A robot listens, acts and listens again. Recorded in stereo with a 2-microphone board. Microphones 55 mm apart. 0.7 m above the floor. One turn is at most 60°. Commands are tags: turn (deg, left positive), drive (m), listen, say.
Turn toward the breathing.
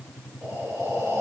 <turn deg="-60"/>
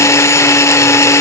<turn deg="-30"/>
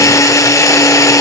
<listen/>
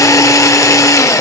<say>Facing where the breathing came from. I can't hear it now.</say>